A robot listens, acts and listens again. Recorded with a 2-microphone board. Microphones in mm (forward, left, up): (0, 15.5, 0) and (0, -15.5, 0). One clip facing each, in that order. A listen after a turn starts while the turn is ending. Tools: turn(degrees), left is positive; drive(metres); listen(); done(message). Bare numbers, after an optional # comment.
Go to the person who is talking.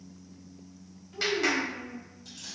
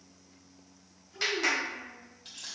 # The child speaking: about 20° left or 160° left.
turn(20)
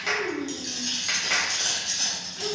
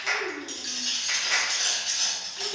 drive(1.0)
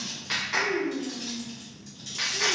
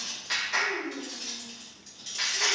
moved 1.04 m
drive(1.0)
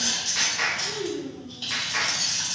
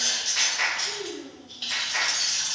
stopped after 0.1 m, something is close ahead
done("Arrived at the child speaking, straight ahead.")